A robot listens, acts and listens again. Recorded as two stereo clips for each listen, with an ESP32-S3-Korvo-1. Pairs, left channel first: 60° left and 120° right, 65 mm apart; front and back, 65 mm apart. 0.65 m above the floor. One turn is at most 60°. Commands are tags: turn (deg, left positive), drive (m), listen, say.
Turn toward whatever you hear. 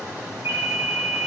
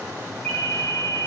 <turn deg="-60"/>
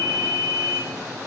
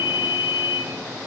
<say>Facing the ringtone.</say>